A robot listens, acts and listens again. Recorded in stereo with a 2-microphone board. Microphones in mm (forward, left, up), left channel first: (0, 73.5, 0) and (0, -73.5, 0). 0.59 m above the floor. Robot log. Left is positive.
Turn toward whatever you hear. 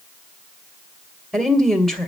cmd yaw +30
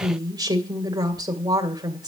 note: So it is at 30° right.
cmd yaw -30
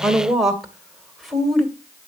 end: Facing the woman speaking, 2 to 4 m away.